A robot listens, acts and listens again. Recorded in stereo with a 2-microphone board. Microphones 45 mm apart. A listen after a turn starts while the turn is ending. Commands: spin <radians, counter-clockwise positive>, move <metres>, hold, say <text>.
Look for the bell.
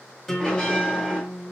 spin 0.35
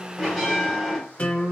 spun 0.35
say Facing the bell, 2 to 4 m away.